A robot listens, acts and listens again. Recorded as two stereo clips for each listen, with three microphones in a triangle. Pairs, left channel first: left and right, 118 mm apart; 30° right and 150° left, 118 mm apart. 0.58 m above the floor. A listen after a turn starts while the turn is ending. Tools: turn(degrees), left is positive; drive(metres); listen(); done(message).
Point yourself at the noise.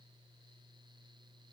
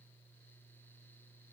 listen()
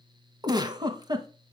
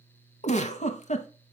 turn(degrees=-35)
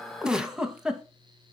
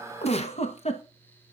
done("Found it: a giggle, straight ahead, 1 to 2 m away.")